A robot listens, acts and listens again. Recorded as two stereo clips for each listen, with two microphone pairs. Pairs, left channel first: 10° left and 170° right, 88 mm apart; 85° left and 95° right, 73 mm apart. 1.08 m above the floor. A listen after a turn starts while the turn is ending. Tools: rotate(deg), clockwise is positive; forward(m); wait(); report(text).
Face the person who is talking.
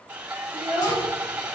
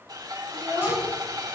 rotate(-20)
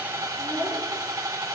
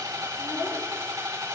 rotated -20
wait()
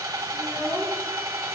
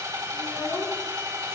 wait()
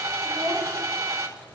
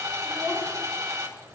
report("Facing where the child speaking came from. I can't hear it now.")